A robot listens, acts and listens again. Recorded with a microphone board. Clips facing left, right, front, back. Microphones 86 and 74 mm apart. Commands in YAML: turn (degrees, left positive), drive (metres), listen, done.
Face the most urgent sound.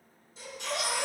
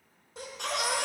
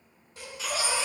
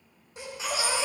turn: -105
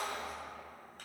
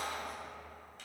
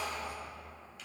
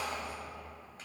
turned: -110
done: "Found it: a baby crying, straight ahead, 2 to 4 m away."